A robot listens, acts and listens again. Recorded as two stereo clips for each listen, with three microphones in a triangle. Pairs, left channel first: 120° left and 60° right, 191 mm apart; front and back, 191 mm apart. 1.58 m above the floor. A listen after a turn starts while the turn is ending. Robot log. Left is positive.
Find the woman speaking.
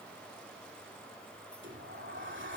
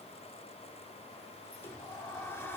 cmd idle
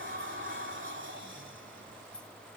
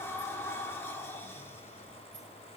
cmd idle
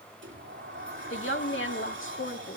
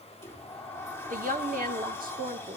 note: The woman speaking: 135° left.
cmd yaw +135
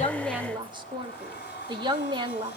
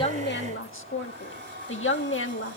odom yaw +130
end: Facing the woman speaking, 2 to 4 m away.